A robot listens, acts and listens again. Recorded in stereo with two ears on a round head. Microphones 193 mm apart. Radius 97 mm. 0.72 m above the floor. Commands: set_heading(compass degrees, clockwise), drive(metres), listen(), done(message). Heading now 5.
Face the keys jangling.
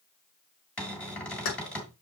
set_heading(305)
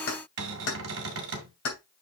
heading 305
set_heading(240)
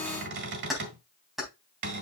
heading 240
done("Facing the keys jangling, 2 to 4 m away.")